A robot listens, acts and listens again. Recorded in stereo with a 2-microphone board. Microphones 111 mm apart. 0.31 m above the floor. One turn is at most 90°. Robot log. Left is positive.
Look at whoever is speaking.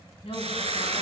note: The woman speaking: about 60° left or 120° left.
cmd yaw +60
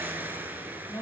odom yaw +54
note: So it is at 25° left.
cmd yaw +25
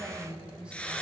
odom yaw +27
note: The woman speaking is now 10° right.
cmd yaw -10
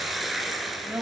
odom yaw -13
note: The woman speaking is now 20° right.
cmd yaw -20
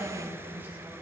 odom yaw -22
note: The woman speaking is now 15° right.
cmd yaw -15
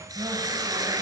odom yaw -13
cmd idle
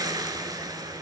cmd idle
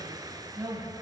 note: The woman speaking is now 20° right.
cmd yaw -20
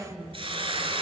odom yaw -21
end: Found it: a woman speaking, straight ahead, 2 to 4 m away.